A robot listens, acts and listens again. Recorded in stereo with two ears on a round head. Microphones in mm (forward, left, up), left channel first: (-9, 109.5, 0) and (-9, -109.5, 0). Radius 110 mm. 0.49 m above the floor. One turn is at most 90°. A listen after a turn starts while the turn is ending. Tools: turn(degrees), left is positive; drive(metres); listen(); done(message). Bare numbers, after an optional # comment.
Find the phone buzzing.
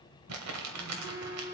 turn(-30)
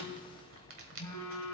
# So it is at 15° left.
turn(15)
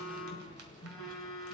done("Found it: a phone buzzing, straight ahead, 2 to 4 m away.")